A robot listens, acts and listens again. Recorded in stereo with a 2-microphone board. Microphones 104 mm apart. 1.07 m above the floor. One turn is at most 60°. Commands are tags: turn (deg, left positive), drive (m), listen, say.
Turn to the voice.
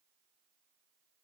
<listen/>
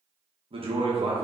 <turn deg="-60"/>
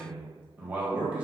<turn deg="-15"/>
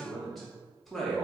<say>Found it: a man speaking, straight ahead.</say>